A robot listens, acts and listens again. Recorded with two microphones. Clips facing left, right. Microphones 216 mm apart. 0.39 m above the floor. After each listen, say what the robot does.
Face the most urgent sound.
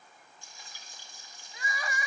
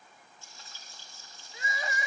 Turn 25° right.
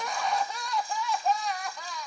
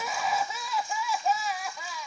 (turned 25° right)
Facing the crying, under 1 m away.